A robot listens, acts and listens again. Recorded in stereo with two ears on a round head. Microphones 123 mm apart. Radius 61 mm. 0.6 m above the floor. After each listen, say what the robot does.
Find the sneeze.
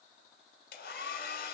Keep listening.
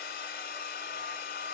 Keep listening.
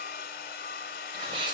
Turn 40° right.
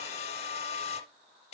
Keep listening.
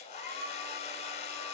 I heard a sneeze, but can't make it out now. It was about straight ahead or 100° right.